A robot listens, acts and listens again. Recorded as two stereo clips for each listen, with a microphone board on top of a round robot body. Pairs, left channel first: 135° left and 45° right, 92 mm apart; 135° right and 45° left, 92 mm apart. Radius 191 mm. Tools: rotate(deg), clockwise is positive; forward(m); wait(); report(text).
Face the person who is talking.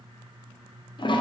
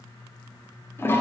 wait()
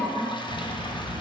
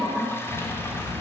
rotate(20)
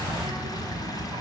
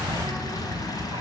report("Facing the child speaking.")